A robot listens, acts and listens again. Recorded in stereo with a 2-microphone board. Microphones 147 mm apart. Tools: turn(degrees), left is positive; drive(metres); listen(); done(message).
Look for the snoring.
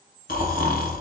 turn(degrees=90)
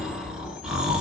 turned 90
done("Facing the snoring.")